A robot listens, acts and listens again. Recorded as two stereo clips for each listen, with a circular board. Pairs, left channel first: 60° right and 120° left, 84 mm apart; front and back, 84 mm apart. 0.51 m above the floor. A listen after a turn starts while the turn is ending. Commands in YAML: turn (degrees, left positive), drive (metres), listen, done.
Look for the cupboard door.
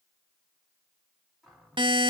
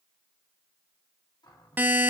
turn: 35
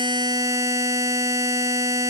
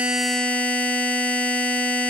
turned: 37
listen: true
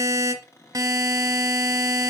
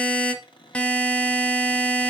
done: "Found it: a cupboard door, straight ahead, 1 to 2 m away."